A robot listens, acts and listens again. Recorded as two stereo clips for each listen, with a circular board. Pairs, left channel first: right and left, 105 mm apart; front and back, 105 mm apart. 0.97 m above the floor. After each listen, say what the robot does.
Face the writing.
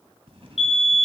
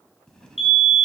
Turn 80° left.
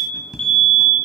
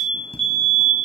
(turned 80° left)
Facing the writing, 1 to 2 m away.